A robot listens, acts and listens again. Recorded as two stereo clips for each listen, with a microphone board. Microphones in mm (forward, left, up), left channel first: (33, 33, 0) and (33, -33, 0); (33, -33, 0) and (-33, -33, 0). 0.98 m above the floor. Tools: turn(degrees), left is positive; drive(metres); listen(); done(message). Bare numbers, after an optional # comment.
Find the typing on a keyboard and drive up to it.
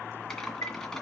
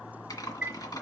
# The typing on a keyboard: 10° left.
turn(10)
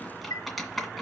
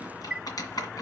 drive(1.0)
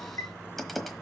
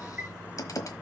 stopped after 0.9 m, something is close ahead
done("Arrived at the typing on a keyboard, straight ahead.")